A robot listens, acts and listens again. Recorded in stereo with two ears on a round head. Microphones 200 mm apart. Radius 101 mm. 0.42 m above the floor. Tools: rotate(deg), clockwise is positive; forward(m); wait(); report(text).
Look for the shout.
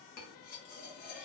wait()
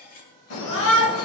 rotate(-55)
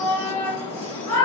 rotate(-10)
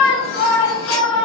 report("Found it: a shout, straight ahead.")